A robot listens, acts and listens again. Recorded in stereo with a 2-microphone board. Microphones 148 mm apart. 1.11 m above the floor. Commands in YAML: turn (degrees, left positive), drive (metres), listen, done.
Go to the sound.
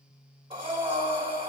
turn: -35
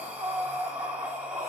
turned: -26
turn: -10
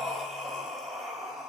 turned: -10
drive: 1.0
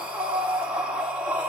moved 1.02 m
turn: -10
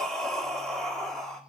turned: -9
drive: 1.0
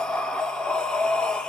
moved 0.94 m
drive: 1.0
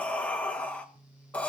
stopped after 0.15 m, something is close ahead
turn: 10
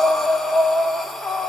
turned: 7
done: "I am next to the breathing."